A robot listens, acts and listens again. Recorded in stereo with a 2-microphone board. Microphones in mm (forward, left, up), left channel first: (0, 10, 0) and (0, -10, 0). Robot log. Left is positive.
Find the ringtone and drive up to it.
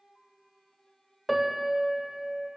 cmd idle
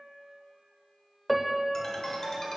note: The ringtone: about 25° left or 155° left.
cmd yaw +25
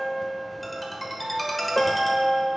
cmd fwd 1.0
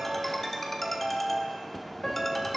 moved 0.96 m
note: The ringtone is now 10° left.
cmd yaw +10
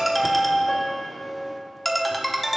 cmd fwd 1.0
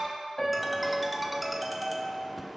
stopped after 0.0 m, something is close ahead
end: Arrived at the ringtone, straight ahead.